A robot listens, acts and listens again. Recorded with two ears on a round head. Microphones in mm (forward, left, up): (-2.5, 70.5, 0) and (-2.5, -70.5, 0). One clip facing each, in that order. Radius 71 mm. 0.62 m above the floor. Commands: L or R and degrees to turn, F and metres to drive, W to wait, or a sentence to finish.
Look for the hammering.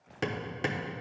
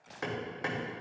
L30
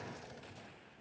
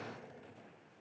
W
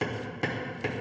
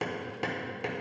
Facing the hammering.